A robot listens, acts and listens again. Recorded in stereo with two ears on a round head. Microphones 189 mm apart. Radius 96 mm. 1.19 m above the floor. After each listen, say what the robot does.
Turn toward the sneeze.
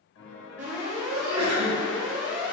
Turn 90° right.
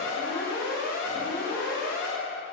I heard a sneeze from this way, but can't make it out now.